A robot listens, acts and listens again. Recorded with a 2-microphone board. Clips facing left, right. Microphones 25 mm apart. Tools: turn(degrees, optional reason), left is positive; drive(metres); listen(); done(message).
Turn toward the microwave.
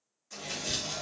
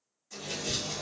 turn(degrees=55, reason="The microwave: about 55° left or 125° left.")
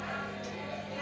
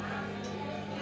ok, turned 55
turn(degrees=65, reason="So it is at 65° left.")
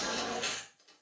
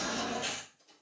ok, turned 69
done("Found it: a microwave, straight ahead.")